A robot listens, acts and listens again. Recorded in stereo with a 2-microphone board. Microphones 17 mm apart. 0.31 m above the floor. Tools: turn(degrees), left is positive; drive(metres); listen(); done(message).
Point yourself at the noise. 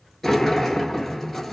turn(degrees=30)
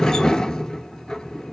turn(degrees=135)
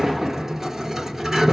turn(degrees=-25)
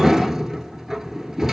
turn(degrees=-25)
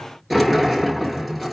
done("Facing the sliding door, under 1 m away.")